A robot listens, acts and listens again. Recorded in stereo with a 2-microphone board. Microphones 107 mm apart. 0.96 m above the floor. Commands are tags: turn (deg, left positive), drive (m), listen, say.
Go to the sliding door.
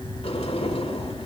<turn deg="75"/>
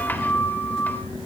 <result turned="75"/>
<turn deg="20"/>
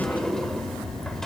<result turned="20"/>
<drive m="1.0"/>
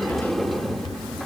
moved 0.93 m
<drive m="1.0"/>
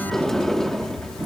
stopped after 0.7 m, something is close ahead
<say>Arrived at the sliding door, straight ahead.</say>